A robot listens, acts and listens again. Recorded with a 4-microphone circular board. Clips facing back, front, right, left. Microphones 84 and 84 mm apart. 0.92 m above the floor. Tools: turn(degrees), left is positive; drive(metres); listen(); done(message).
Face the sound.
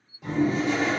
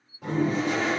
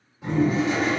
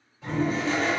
turn(degrees=-15)
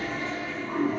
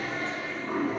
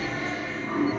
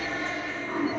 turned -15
done("Found it: a toilet flushing, straight ahead.")